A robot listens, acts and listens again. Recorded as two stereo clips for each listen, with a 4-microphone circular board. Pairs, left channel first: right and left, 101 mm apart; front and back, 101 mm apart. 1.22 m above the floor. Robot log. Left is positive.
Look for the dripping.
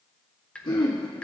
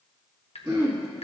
note: The dripping: 10° right.
cmd yaw -10
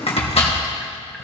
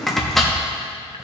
cmd idle
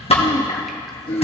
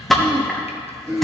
cmd idle
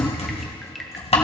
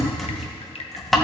end: Found it: dripping, straight ahead.